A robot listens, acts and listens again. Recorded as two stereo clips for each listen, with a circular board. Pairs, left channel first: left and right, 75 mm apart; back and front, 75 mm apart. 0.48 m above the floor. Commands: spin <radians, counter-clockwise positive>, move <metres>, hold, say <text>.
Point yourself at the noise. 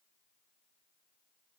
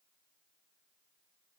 hold
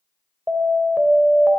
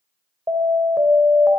spin -0.44
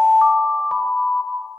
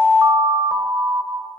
say Found it: an alarm, straight ahead.